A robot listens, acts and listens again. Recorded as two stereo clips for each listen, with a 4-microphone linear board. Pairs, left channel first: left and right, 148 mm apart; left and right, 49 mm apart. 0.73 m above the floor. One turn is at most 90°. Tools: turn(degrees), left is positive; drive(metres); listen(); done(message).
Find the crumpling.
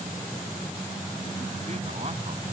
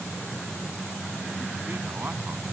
listen()
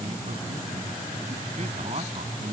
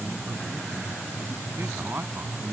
listen()
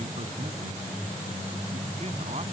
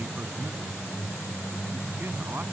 done("I can't make out crumpling to turn to.")